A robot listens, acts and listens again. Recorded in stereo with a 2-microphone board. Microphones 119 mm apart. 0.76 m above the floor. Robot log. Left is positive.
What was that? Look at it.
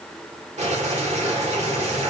note: The boiling: about 75° right or 105° right.
cmd yaw -75
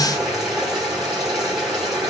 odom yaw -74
end: Found it: boiling, straight ahead, 1 to 2 m away.